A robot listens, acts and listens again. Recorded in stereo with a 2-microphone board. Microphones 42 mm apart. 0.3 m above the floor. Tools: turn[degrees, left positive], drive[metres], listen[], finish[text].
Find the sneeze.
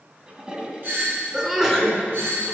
Action: turn[-30]
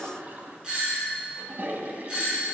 Action: listen[]
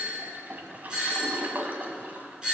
Action: finish[I heard a sneeze, but can't make it out now. It was about 15° left or 135° right.]